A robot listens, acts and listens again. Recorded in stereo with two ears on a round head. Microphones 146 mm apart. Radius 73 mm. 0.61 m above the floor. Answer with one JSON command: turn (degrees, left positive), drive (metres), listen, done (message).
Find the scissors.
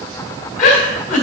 {"listen": true}
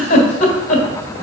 {"listen": true}
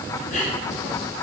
{"done": "I can't make out scissors to turn to."}